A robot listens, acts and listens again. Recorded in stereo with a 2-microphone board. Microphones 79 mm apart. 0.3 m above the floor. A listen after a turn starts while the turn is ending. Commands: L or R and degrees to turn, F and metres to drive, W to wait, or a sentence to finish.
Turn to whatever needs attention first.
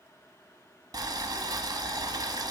W
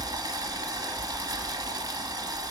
W
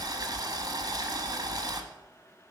I can't make out anything urgent to turn to.